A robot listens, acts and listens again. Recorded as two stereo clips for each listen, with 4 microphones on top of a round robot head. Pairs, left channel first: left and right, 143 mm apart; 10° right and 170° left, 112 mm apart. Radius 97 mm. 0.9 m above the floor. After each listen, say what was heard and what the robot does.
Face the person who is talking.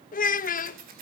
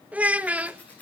The child speaking: 90° left. Turn 90° left.
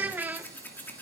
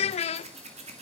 The child speaking is now 10° right. Turn 10° right.
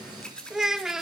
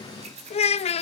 Found it: a child speaking, straight ahead, under 1 m away.